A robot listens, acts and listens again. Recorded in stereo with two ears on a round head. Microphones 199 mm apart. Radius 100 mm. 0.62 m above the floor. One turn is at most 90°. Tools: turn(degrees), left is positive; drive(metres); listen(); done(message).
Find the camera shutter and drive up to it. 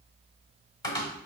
listen()
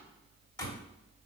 listen()
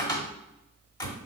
done("I can't make out a camera shutter, only a cupboard door.")